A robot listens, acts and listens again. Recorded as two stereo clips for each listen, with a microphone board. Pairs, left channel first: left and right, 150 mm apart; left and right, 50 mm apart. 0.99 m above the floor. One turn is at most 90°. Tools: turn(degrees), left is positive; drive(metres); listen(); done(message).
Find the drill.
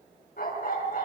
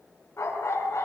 listen()
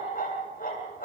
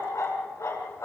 listen()
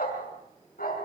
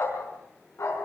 done("I can't make out a drill to turn to.")